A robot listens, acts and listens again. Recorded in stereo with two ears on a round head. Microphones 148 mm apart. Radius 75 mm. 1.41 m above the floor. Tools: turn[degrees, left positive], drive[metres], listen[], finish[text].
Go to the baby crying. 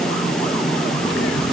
Action: listen[]
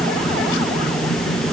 Action: listen[]
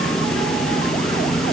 Action: finish[I can't make out a baby crying.]